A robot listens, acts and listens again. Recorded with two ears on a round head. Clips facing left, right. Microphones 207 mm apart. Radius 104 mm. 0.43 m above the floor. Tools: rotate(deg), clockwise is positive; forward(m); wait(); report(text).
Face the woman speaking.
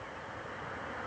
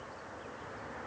wait()
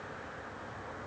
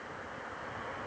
wait()
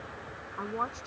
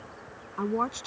rotate(55)
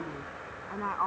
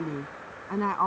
rotate(55)
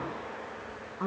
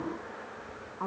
rotate(-20)
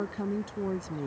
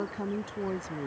report("Found it: a woman speaking, straight ahead.")